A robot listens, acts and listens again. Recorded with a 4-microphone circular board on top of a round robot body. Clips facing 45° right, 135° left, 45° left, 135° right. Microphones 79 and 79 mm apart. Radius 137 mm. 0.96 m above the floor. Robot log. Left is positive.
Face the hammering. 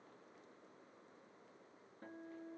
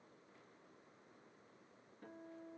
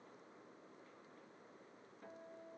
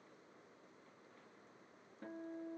cmd idle
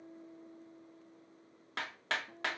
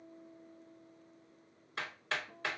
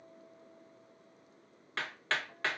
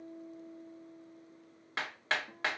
note: The hammering: 60° right.
cmd yaw -60
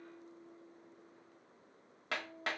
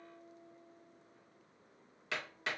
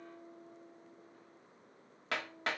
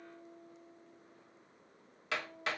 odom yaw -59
end: Facing the hammering.